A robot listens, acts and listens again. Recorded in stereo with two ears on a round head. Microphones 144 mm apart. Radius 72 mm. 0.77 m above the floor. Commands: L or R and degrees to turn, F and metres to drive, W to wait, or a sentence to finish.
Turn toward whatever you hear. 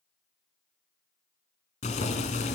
L45
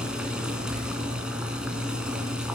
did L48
Found it: boiling, straight ahead, 2 to 4 m away.